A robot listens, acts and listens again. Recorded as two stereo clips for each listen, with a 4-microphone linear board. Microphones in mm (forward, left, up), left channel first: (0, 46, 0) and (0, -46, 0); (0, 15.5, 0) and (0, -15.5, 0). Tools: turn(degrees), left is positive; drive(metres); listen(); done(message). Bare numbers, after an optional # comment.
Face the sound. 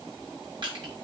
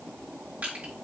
# The crushing: about 55° right or 125° right.
turn(-55)
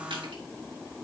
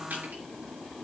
listen()
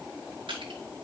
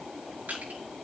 # So it is at 65° right.
turn(-65)
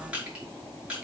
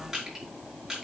# The crushing is now 10° right.
turn(-10)
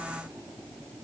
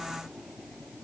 listen()
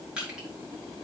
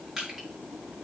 # The crushing is now 10° right.
turn(-10)
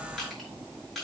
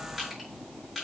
done("Found it: crushing, straight ahead, over 4 m away.")